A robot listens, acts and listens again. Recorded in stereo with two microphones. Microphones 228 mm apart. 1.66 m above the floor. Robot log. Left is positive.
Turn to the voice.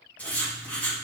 cmd idle
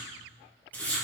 cmd idle
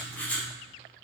end: I can't make out anyone speaking to turn to.